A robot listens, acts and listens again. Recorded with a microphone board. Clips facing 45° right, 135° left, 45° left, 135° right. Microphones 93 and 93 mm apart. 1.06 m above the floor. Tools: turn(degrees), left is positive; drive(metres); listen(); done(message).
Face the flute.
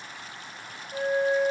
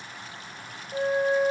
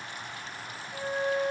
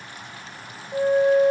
turn(degrees=-140)
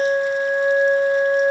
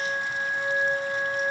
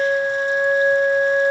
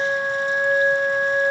turn(degrees=-20)
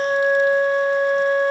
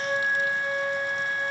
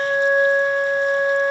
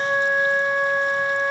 done("Found it: a flute, straight ahead.")